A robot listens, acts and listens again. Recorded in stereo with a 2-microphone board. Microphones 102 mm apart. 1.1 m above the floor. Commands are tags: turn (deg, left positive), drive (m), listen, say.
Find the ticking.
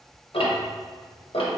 <turn deg="65"/>
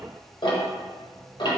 <turn deg="50"/>
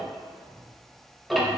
<say>Facing the ticking.</say>